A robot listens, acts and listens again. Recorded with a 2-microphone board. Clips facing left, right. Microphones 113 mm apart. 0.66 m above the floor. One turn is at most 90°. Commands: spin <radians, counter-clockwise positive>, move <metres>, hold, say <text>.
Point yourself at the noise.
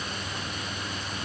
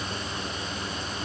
hold
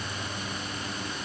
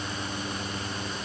hold
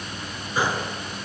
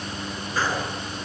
spin 0.52
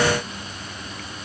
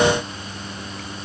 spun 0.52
hold
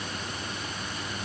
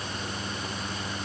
say I heard a gunshot, but can't make it out now. It was about 15° right or 135° left.